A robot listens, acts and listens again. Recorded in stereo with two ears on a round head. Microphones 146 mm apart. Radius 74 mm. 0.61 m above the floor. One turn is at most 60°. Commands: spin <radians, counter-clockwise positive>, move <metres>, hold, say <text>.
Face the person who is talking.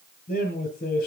spin 0.96
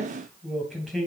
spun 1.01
say Found it: a man speaking, straight ahead.